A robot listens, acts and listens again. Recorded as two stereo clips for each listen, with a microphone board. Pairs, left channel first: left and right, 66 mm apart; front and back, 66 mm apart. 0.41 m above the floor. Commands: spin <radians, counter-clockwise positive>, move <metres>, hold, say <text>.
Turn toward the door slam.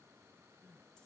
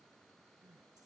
hold
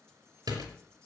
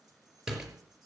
spin -1.75
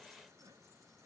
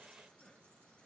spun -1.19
spin -0.52
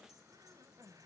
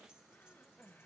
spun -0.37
spin -0.17
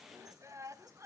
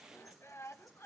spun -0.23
say I heard a door slam from this way, but can't make it out now.